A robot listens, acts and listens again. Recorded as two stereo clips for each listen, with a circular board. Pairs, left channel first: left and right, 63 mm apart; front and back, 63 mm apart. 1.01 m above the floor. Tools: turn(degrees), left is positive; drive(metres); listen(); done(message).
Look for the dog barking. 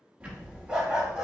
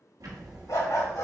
turn(degrees=-10)
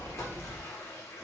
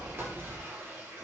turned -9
listen()
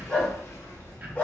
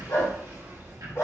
turn(degrees=30)
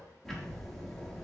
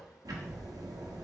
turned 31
listen()
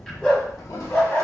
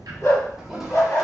turn(degrees=25)
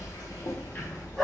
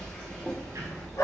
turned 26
done("Found it: a dog barking, straight ahead, 2 to 4 m away.")